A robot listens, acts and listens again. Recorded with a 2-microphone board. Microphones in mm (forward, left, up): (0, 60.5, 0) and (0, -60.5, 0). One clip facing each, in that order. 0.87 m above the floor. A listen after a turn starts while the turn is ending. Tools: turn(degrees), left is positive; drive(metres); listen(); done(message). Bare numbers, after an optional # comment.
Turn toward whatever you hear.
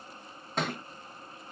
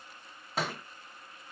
turn(-30)
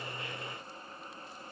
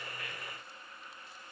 listen()
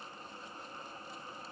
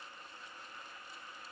done("I heard a thud, but can't make it out now. It was about 25° left or 145° right.")